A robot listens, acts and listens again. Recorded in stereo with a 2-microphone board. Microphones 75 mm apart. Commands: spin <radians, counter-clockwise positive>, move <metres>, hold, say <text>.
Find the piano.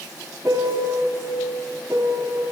spin -0.96
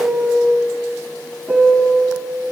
spin -0.17
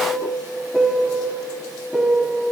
say Found it: a piano, straight ahead.